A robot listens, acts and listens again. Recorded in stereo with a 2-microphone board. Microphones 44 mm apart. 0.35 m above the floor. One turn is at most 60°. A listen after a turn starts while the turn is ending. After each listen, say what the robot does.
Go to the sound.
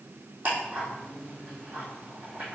Turn 35° right.
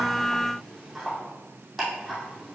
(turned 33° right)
Drive 1.0 m forward.
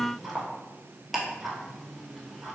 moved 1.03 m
Drive 1.0 m forward.
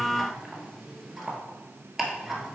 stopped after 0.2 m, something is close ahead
I am next to the ticking.